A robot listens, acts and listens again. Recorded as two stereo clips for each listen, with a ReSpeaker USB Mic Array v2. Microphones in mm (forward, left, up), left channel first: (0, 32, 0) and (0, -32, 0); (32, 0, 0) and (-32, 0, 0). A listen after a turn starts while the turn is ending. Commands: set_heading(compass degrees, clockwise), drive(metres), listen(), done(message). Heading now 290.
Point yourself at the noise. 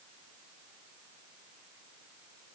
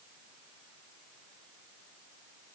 listen()
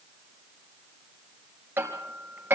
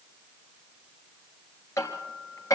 set_heading(325)
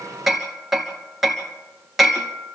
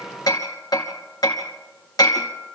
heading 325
done("Facing the hammering, 2 to 4 m away.")